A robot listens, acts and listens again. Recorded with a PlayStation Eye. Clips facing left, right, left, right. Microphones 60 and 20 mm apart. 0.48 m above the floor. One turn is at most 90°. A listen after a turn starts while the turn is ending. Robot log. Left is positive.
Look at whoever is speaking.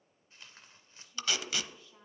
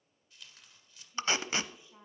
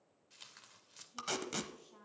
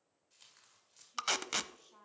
cmd yaw -30
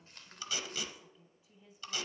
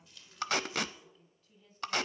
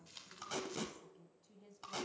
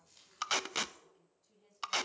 note: So it is at 15° left.
cmd yaw +15
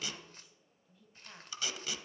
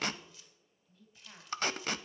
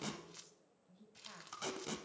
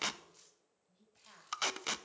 end: Facing the woman speaking, 2 to 4 m away.